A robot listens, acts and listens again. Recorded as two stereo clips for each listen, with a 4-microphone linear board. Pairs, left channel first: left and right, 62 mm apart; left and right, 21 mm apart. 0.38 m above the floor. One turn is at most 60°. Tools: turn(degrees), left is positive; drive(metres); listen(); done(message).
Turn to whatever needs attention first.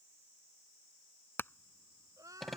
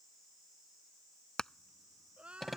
turn(degrees=-60)
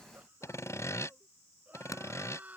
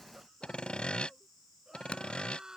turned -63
turn(degrees=-30)
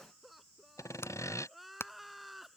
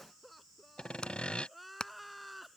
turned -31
done("Found it: crying, straight ahead.")